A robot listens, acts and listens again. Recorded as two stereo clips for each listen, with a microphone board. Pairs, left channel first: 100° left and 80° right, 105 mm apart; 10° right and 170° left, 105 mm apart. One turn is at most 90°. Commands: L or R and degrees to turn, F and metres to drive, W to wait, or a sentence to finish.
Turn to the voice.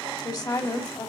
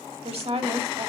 L90
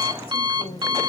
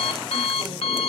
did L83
L70
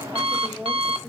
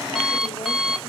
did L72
W
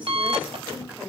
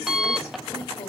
Facing where the woman speaking came from. I can't hear it now.